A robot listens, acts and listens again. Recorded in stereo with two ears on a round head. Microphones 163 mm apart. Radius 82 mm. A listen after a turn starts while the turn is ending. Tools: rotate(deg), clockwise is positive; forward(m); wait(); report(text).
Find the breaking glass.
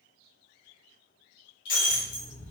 rotate(-75)
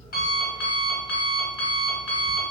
wait()
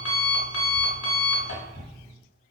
report("I heard breaking glass, but can't make it out now. It was about straight ahead or 30° left.")